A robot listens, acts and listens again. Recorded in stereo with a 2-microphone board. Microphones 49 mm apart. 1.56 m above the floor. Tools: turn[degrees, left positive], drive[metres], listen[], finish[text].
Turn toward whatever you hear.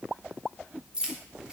Thought: The keys jangling: about 20° right or 160° right.
Action: turn[-20]
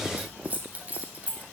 Thought: The keys jangling: about 30° right or 150° right.
Action: turn[-30]
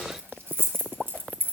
Thought: So it is at 140° right.
Action: turn[-140]
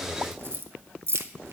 Thought: The keys jangling is now 55° right.
Action: turn[-55]
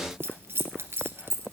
Thought: The keys jangling is now 55° right.
Action: turn[-55]
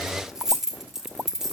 Thought: The keys jangling is now 10° right.
Action: turn[-10]
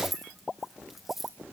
Action: finish[Facing the keys jangling, 1 to 2 m away.]